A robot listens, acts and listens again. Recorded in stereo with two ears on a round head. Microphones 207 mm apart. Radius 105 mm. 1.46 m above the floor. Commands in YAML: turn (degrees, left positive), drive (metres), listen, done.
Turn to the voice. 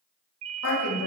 turn: 65
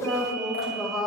done: "Found it: a woman speaking, straight ahead."